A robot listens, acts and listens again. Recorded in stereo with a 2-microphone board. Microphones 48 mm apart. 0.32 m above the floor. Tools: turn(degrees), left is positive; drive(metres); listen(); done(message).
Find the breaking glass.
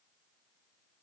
listen()
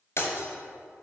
turn(degrees=60)
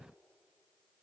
listen()
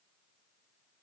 done("I heard breaking glass, but can't make it out now. It was about straight ahead or 60° left.")